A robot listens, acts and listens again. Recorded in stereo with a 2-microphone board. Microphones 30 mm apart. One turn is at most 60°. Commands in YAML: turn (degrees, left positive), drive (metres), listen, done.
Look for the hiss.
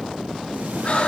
listen: true
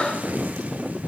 listen: true
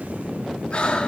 done: "I can't make out a hiss, only breathing."